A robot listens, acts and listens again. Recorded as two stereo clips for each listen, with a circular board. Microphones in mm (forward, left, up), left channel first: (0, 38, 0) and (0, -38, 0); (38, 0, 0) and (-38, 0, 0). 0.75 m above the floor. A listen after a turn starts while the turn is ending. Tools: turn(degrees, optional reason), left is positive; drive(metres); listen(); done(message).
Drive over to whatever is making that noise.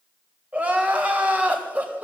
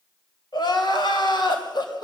turn(degrees=-15, reason="The crying: 15° right.")
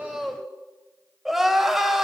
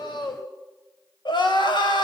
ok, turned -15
drive(metres=1.0)
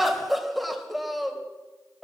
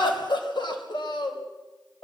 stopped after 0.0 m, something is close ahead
done("Something is in my way. I am facing the crying but have not reached it.")